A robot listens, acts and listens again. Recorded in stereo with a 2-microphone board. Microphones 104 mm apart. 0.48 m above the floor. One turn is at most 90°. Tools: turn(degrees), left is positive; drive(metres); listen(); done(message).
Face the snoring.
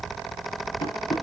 listen()
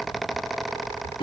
listen()
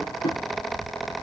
done("I can't make out snoring to turn to.")